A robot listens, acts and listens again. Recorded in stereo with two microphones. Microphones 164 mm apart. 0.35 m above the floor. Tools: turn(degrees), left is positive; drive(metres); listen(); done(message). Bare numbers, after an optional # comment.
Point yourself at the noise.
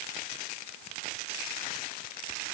listen()
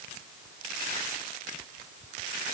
listen()
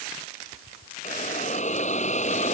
# The hiss: about 45° left or 135° left.
turn(45)
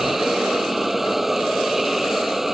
done("Found it: a hiss, straight ahead.")